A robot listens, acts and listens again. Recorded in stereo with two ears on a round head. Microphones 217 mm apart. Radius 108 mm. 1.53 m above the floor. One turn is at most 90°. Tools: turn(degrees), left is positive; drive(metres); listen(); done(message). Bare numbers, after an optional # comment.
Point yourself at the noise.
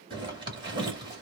# The zipper: about 20° right or 160° right.
turn(-20)
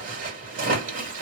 # So it is at 140° right.
turn(-90)
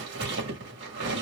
# The zipper is now 60° right.
turn(-60)
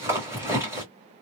# The zipper is now 10° right.
turn(-10)
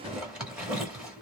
done("Facing the zipper, 1 to 2 m away.")